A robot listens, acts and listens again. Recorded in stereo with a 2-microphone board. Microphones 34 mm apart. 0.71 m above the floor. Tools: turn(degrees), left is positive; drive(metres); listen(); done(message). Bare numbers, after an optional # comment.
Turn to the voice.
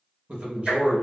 # The man speaking: about 35° right or 145° right.
turn(-35)
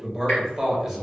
# So it is at 10° right.
turn(-10)
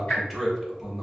done("Found it: a man speaking, straight ahead, 1 to 2 m away.")